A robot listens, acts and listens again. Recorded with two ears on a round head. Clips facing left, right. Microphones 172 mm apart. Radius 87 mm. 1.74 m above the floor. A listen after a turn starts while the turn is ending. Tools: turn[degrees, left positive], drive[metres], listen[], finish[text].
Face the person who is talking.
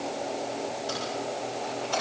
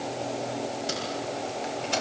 Action: listen[]
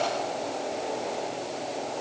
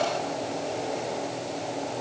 Action: listen[]
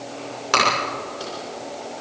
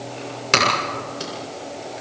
Action: finish[I can't make out anyone speaking to turn to.]